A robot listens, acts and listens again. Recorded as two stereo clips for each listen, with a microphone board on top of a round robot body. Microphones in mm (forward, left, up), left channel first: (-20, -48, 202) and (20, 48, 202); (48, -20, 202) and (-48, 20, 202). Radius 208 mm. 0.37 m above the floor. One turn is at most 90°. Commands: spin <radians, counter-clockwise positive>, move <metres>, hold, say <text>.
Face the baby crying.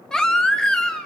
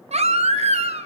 spin 1.57
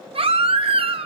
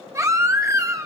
spin 1.57
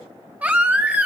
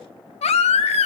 spin -0.17
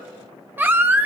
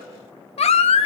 say Found it: a baby crying, straight ahead.